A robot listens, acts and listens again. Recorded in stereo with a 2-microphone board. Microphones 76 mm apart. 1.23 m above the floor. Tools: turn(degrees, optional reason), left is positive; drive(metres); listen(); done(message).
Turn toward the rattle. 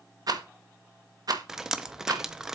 turn(degrees=-60, reason="The rattle: about 60° right or 120° right.")
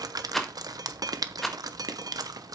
done("Facing the rattle.")